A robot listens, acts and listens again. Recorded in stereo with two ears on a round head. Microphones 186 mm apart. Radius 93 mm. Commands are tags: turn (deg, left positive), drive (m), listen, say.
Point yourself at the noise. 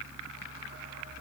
<listen/>
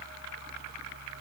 <listen/>
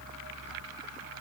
<say>I can't make out anything.</say>